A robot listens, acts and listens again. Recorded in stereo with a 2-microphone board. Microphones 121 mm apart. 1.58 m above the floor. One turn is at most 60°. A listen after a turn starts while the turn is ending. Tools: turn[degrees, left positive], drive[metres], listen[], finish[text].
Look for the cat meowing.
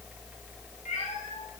Action: turn[60]
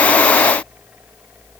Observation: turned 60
Thought: Nothing new. It was at 30° left.
Action: turn[30]
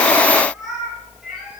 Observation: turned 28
Action: finish[Found it: a cat meowing, straight ahead, over 4 m away.]